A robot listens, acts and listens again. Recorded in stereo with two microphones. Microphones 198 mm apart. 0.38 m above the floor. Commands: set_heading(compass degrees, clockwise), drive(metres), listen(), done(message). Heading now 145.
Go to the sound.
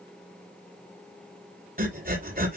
set_heading(195)
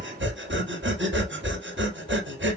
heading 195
set_heading(275)
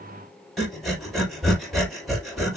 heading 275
drive(1.0)
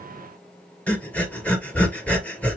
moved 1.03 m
drive(1.0)
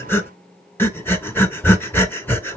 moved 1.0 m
set_heading(265)
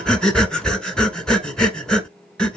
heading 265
drive(1.0)
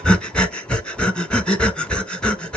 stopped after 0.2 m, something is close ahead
done("Arrived at the breathing, straight ahead.")